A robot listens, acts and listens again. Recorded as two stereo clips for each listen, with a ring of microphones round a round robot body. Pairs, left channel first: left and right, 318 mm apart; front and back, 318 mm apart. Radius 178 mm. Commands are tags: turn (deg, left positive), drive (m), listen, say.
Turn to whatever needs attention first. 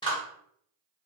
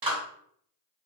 <listen/>
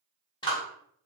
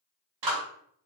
<listen/>
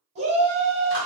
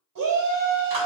<turn deg="-160"/>
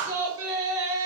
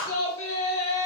<turn deg="-45"/>
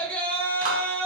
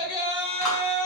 <say>Found it: a shout, straight ahead.</say>